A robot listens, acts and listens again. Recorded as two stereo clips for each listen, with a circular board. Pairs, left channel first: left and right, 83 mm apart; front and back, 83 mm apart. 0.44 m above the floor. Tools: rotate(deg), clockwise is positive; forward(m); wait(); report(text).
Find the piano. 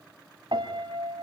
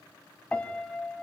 rotate(75)
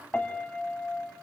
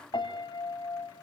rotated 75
rotate(-20)
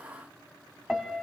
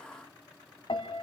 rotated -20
report("Facing the piano.")